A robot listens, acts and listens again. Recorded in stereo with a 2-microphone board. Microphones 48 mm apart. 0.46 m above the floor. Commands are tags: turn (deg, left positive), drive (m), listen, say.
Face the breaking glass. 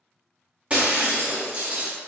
<turn deg="-25"/>
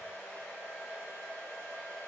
<listen/>
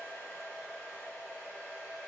<say>I heard breaking glass, but can't make it out now. It was about straight ahead or 130° right.</say>